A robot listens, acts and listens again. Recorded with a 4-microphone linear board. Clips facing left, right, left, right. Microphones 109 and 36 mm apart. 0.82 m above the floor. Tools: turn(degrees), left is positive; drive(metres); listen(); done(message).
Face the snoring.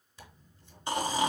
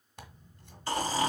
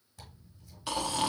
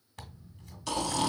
turn(degrees=20)
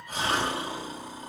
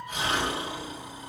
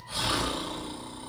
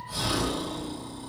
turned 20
turn(degrees=140)
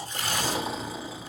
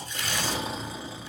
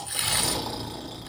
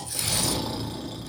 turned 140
done("Facing the snoring.")